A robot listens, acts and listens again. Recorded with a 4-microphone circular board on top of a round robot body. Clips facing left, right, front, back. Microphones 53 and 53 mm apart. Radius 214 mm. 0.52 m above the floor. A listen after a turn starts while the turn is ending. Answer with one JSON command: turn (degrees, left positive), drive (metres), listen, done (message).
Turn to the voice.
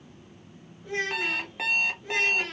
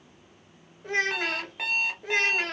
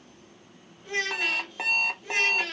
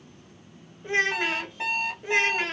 {"turn": -120}
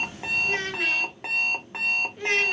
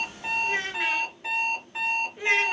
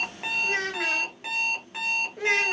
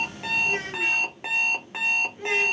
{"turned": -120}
{"turn": -10}
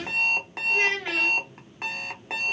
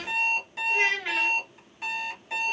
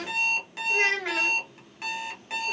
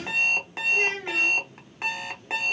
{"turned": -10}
{"done": "Found it: a child speaking, straight ahead, under 1 m away."}